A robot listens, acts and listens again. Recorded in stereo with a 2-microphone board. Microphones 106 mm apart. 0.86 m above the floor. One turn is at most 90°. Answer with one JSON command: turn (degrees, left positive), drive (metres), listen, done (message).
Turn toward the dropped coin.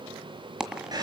{"turn": -30}
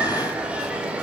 {"listen": true}
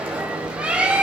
{"done": "I heard a dropped coin, but can't make it out now. It was about 25° left or 145° right."}